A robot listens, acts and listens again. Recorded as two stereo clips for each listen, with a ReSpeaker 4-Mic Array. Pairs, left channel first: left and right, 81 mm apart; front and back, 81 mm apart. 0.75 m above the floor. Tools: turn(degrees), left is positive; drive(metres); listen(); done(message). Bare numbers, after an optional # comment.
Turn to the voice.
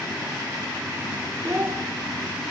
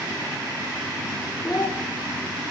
# The child speaking: 35° right.
turn(-35)
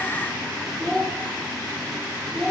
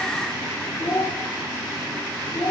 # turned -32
done("Found it: a child speaking, straight ahead, 1 to 2 m away.")